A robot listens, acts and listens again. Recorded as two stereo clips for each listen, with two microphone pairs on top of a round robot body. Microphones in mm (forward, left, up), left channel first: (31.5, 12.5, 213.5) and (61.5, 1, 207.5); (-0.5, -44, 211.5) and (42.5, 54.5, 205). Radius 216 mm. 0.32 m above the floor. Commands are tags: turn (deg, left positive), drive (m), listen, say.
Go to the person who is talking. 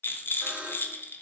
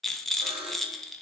<listen/>
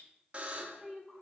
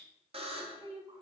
<turn deg="75"/>
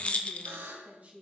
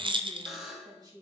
<turn deg="20"/>
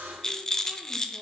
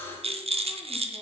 <listen/>
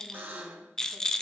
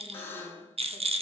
<listen/>
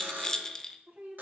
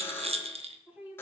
<drive m="1.0"/>
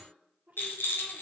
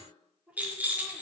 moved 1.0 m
<drive m="1.0"/>
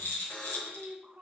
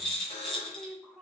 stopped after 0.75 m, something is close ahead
<turn deg="-10"/>
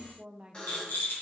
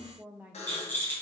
<say>Arrived at the woman speaking, straight ahead.</say>